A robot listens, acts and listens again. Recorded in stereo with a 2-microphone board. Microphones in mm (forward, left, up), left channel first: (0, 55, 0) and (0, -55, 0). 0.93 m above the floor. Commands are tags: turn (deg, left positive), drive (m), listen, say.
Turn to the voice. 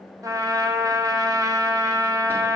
<listen/>
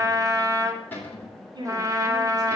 <turn deg="-40"/>
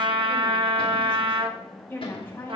<turn deg="20"/>
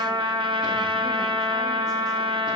<listen/>
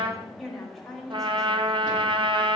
<say>Found it: a woman speaking, straight ahead, 2 to 4 m away.</say>